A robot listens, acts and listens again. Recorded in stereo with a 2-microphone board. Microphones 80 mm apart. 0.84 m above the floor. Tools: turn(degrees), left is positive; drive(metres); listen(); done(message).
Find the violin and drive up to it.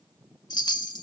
listen()
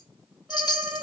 turn(degrees=-20)
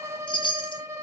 turn(degrees=-140)
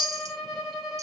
drive(metres=1.0)
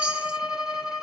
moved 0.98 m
drive(metres=1.0)
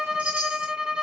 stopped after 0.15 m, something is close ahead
turn(degrees=-10)
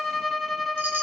done("I am next to the violin.")